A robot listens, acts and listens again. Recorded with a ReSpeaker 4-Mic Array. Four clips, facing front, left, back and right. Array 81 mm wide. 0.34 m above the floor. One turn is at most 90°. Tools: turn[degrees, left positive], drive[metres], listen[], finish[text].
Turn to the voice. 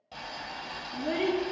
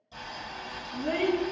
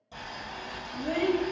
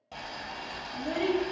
Thought: The child speaking: 70° left.
Action: turn[70]
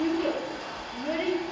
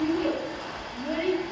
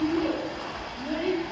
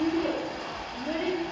Thought: The child speaking is now 20° left.
Action: turn[20]
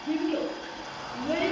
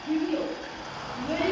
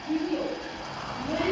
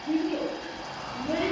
Action: finish[Found it: a child speaking, straight ahead.]